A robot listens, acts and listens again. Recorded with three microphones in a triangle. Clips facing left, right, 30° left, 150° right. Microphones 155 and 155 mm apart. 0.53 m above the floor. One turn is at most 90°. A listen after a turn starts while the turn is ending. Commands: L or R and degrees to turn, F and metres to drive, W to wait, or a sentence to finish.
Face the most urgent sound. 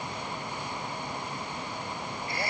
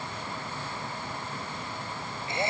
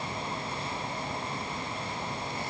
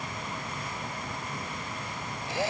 W
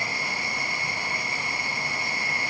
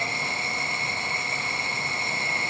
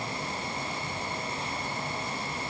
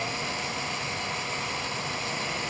W
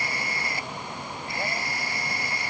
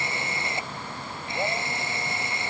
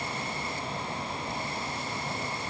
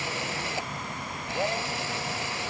I can't make out anything urgent to turn to.